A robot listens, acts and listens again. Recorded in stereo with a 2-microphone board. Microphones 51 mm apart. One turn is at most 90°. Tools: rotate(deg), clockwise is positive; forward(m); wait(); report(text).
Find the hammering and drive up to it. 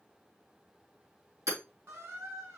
rotate(90)
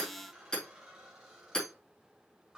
rotate(-15)
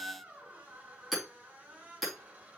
forward(1.0)
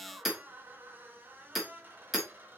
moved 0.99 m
forward(1.0)
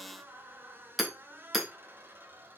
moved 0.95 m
forward(1.0)
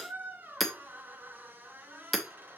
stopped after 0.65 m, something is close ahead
report("Arrived at the hammering, straight ahead.")